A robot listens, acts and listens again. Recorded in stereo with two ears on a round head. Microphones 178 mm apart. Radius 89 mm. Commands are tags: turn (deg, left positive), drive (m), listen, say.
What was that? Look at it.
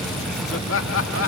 <turn deg="70"/>
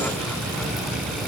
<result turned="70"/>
<listen/>
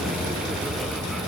<listen/>
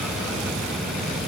<say>I heard laughter, but can't make it out now. It was about straight ahead or 40° left.</say>